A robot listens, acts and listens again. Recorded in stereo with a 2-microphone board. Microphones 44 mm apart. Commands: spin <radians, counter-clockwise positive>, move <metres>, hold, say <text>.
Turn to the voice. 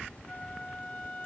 hold
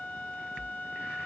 hold
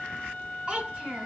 spin -0.44
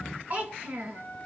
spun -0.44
spin -2.27
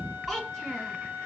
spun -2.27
say Found it: a child speaking, straight ahead.